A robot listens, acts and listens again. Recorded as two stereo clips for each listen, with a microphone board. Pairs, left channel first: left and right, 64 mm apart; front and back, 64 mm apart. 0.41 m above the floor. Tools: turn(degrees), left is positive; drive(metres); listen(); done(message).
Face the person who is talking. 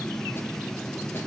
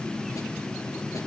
listen()
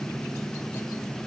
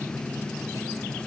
listen()
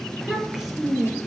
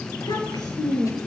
done("Facing the child speaking, over 4 m away.")